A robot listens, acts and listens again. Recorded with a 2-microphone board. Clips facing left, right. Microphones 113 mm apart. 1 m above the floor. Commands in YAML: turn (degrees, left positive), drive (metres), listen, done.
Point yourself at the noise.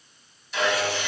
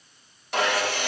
turn: -90
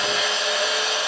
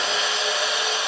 done: "Found it: sawing, straight ahead."